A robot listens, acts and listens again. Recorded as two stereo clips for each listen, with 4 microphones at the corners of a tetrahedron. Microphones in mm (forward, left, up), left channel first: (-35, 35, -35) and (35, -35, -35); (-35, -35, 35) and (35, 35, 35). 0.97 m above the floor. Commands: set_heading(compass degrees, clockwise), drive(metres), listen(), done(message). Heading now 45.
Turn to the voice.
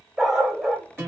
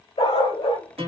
listen()
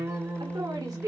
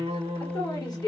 set_heading(140)
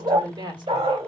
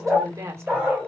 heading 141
set_heading(156)
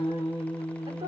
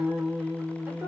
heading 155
listen()
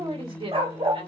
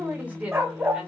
set_heading(185)
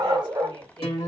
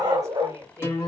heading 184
listen()
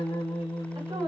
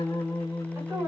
set_heading(204)
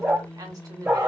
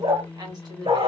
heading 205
done("Found it: a woman speaking, straight ahead.")